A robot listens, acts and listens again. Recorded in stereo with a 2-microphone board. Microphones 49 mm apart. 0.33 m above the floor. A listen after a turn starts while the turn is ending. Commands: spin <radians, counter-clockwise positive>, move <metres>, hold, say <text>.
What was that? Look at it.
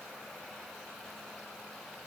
hold
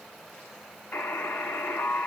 spin 0.70
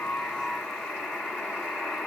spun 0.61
spin 0.17
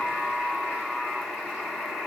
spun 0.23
say Found it: a buzzer, straight ahead, 1 to 2 m away.